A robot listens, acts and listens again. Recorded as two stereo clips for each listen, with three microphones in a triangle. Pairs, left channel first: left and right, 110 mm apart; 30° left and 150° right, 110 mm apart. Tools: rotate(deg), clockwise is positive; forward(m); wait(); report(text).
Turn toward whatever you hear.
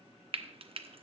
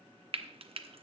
rotate(120)
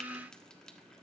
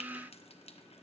wait()
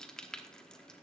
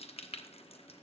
report("Found it: frying, straight ahead.")